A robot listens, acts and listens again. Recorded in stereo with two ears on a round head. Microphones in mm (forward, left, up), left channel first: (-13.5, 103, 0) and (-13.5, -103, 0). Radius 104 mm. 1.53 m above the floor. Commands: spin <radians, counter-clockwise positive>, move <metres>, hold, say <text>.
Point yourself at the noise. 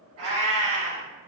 spin -1.13
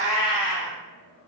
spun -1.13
spin -0.79
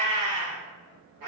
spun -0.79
spin -0.79
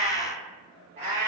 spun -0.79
spin -0.52
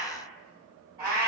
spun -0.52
spin -0.26
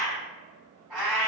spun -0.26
say Facing the cat meowing.